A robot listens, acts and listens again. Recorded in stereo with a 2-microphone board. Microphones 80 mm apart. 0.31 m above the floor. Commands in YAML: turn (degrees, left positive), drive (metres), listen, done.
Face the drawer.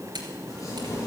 listen: true
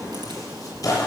listen: true
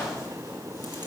done: "I can't make out a drawer, only tearing paper."